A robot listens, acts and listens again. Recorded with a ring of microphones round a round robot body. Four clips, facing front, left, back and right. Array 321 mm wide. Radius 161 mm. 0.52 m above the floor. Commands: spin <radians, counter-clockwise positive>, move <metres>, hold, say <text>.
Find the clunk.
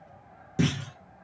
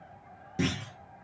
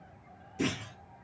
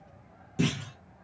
spin 0.17
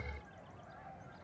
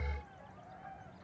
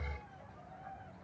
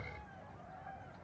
say I heard a clunk from this way, but can't make it out now.